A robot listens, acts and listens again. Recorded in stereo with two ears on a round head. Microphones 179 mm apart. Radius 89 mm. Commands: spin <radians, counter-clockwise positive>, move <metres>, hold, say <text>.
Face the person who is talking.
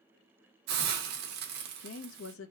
spin 1.22
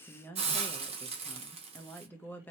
spin 0.17
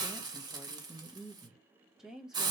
say Facing the woman speaking.